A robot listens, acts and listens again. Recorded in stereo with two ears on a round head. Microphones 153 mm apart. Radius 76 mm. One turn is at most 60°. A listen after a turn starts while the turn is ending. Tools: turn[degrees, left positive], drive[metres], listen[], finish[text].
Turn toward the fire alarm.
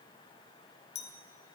Action: listen[]
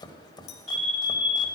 Action: turn[30]
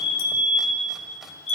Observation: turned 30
Thought: So it is at 145° left.
Action: turn[60]
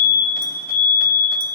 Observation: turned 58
Thought: The fire alarm is now 90° left.
Action: turn[60]
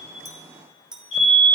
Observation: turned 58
Thought: The fire alarm is now 30° left.
Action: turn[30]
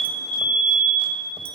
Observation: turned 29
Action: finish[Facing the fire alarm, over 4 m away.]